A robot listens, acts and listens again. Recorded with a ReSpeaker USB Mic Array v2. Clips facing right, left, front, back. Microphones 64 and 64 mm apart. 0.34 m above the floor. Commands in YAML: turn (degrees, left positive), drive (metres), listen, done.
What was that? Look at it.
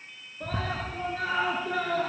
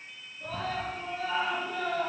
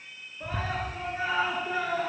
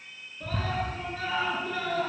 turn: -70
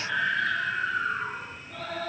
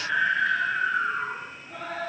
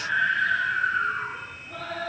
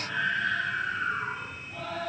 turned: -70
turn: 20
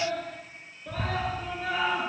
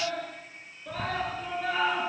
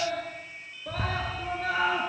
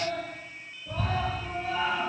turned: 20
done: "Found it: a scream, straight ahead, over 4 m away."